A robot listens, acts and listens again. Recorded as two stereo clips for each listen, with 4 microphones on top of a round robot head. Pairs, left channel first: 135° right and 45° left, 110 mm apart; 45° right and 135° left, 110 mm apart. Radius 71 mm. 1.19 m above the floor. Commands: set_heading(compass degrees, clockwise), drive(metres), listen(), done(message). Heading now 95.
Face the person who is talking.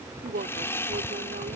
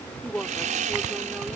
set_heading(45)
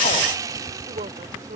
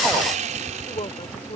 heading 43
set_heading(33)
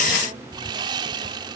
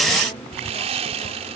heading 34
listen()
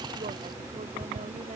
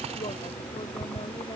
listen()
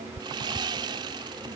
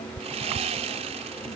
done("Facing where the woman speaking came from. I can't hear it now.")